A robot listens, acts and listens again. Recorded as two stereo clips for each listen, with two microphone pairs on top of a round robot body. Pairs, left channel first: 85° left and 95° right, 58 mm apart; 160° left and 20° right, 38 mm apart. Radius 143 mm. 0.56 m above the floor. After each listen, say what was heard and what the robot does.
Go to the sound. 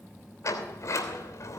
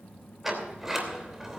The sliding door: 55° left. Turn 55° left.
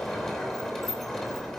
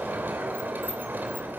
Drive 1.0 m forward.
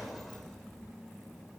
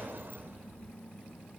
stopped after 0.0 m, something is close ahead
Something is in my way. I am facing the sliding door but have not reached it.